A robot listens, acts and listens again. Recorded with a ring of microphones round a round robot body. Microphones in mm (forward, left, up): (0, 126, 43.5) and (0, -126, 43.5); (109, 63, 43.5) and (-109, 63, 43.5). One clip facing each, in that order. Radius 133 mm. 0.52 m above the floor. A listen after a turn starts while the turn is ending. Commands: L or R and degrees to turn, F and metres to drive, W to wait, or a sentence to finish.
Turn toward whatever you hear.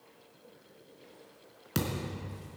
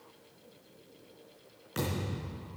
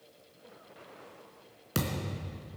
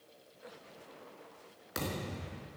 L55
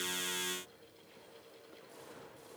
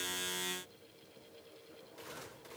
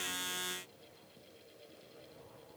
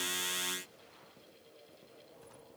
Facing where the thud came from. I can't hear it now.